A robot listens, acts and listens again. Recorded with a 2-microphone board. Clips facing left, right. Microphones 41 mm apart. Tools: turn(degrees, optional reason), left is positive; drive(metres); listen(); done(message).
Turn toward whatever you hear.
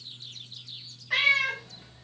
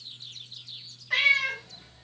turn(degrees=30)
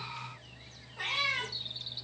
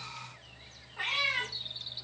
turn(degrees=-25, reason="So it is at 25° right.")
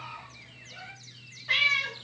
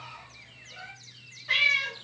done("Found it: a cat meowing, straight ahead.")